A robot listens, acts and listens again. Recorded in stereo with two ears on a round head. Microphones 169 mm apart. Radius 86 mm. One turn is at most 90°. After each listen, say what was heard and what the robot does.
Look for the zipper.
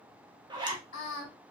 The zipper: about 25° right or 155° right. Turn 25° right.
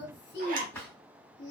So it is at 135° right. Turn 90° right.
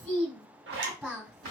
The zipper is now 60° right. Turn 60° right.
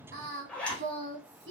Found it: a zipper, straight ahead, under 1 m away.